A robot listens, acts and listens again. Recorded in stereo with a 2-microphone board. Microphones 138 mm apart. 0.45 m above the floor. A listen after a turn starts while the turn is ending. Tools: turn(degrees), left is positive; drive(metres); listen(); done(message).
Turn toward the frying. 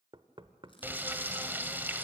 turn(degrees=-30)
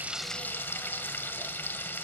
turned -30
turn(degrees=15)
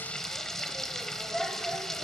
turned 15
done("Found it: frying, straight ahead, 1 to 2 m away.")